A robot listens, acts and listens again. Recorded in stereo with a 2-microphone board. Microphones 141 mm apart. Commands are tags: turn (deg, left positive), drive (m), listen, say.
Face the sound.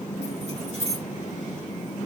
<turn deg="-50"/>
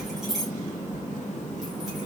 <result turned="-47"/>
<say>Found it: keys jangling, straight ahead.</say>